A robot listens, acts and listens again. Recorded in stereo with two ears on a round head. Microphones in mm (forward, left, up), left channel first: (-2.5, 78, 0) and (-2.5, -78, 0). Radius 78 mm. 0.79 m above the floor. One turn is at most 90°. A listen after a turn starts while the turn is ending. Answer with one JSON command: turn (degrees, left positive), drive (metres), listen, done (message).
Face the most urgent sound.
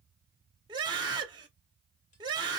{"turn": -25}
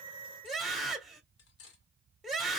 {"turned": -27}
{"done": "Found it: a scream, straight ahead, 2 to 4 m away."}